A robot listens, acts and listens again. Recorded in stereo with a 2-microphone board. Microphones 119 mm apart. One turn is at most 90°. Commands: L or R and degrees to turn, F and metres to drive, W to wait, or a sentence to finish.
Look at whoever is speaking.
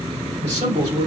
R75
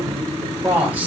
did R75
R15
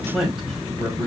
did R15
Facing the man speaking.